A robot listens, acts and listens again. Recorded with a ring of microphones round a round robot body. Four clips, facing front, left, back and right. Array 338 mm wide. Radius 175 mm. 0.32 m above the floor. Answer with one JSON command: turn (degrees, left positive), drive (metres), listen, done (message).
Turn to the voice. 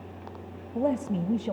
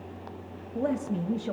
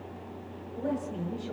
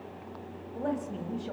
{"turn": 30}
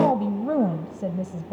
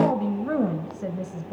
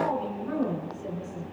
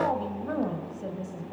{"turn": 25}
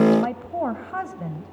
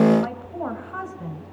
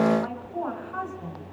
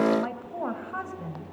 {"done": "Found it: a woman speaking, straight ahead."}